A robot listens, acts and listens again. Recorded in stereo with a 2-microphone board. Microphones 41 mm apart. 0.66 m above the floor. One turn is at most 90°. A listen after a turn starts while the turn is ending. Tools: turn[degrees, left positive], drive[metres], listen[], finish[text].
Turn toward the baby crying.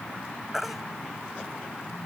Action: turn[-30]
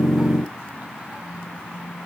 Action: listen[]
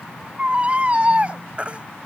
Thought: So it is at 145° right.
Action: turn[-90]
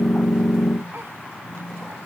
Thought: Nothing new. It was at 55° right.
Action: turn[-55]
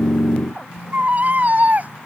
Thought: The baby crying is now 40° right.
Action: turn[-40]
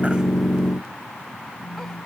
Action: listen[]
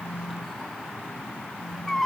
Thought: The baby crying is now 10° left.
Action: turn[10]
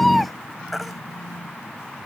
Action: finish[Found it: a baby crying, straight ahead.]